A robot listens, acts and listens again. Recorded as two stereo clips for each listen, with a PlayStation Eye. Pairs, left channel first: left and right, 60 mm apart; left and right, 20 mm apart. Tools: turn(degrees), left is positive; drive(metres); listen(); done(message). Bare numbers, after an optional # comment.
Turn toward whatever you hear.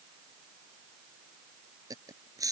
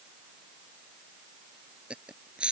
turn(-90)
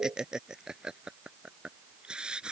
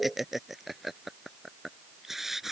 # So it is at 20° right.
turn(-20)
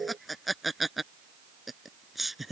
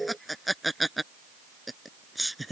done("Found it: laughter, straight ahead.")